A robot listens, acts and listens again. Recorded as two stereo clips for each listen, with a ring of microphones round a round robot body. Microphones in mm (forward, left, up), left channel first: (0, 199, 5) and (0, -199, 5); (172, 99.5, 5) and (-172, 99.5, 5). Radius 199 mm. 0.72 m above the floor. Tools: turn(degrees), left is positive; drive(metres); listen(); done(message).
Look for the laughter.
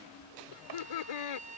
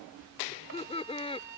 turn(degrees=75)
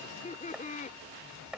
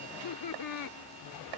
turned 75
turn(degrees=20)
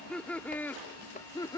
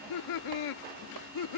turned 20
turn(degrees=10)
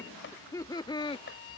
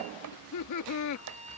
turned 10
turn(degrees=15)
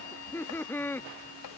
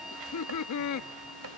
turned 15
done("Facing the laughter.")